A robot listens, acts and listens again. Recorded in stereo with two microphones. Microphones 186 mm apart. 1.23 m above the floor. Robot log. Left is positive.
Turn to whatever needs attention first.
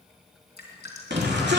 note: The shout: about 65° right or 115° right.
cmd yaw -65
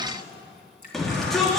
end: Found it: a shout, straight ahead.